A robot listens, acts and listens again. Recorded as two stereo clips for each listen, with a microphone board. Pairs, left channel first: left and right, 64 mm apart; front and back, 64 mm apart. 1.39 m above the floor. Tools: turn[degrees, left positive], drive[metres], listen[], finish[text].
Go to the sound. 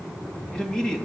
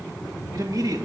Thought: The man speaking: 170° left.
Action: turn[170]
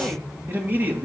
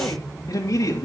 Thought: The man speaking is now 30° right.
Action: turn[-30]
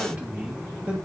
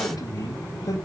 Thought: The man speaking is now 15° right.
Action: turn[-15]
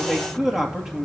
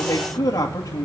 Action: drive[1.0]
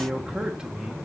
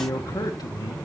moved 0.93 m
Thought: The man speaking is now 15° right.
Action: turn[-15]
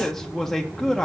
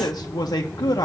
Action: drive[1.0]
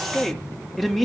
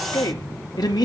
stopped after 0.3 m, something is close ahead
Action: finish[I am next to the man speaking.]